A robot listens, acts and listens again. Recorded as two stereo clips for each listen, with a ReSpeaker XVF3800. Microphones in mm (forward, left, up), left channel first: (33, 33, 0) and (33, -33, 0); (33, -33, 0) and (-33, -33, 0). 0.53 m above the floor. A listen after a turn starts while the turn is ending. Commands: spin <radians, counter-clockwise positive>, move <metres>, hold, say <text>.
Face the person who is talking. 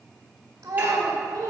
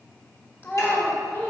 spin -1.05
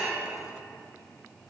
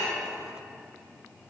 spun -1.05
hold
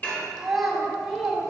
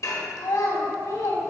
say Facing the child speaking, 1 to 2 m away.